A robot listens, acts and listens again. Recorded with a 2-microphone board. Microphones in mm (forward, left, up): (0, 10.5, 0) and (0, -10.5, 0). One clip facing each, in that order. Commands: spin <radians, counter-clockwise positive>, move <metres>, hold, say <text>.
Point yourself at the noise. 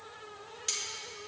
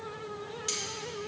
spin 0.52
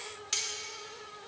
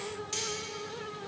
spin 2.62
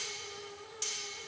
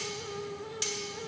spin -0.52
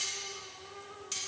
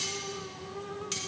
spin -0.26
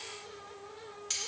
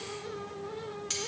say Facing the cutlery clinking, 1 to 2 m away.